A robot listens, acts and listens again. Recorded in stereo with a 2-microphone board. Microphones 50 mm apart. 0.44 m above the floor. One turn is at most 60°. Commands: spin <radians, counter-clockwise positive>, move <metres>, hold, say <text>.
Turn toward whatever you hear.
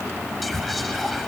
spin 0.52
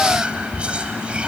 spin -0.44
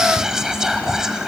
spin -0.17
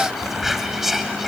say Found it: whispering, straight ahead, 2 to 4 m away.